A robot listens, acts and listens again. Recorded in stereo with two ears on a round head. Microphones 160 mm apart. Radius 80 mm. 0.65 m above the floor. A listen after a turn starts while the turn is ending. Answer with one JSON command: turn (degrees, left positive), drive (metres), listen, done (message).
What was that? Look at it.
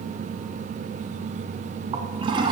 {"turn": -25}
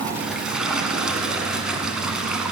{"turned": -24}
{"done": "Found it: a toilet flushing, straight ahead."}